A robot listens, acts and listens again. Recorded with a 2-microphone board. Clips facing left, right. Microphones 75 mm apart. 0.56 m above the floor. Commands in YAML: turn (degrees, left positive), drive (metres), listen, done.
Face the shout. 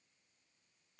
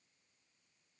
listen: true
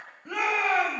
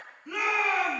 turn: 60
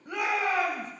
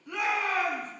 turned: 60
turn: 55
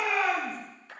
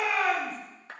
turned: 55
done: "Facing the shout, 2 to 4 m away."